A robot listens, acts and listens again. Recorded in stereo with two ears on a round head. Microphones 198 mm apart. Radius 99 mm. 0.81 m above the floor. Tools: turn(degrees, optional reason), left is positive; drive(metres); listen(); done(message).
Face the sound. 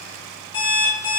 turn(degrees=20, reason="The alarm clock: about 20° left or 160° left.")
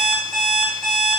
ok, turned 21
done("Facing the alarm clock.")